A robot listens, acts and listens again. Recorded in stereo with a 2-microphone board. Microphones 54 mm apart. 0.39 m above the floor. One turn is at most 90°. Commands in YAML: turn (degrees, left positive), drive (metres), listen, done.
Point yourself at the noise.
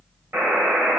turn: -45
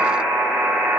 turn: -75
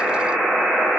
turn: 10
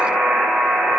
done: "Facing the buzzer."